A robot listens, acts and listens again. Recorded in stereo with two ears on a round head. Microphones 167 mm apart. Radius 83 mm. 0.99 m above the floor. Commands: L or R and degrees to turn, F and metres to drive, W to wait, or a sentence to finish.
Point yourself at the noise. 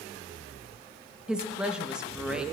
R30
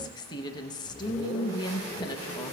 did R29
L25
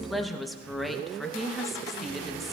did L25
Facing the woman speaking, under 1 m away.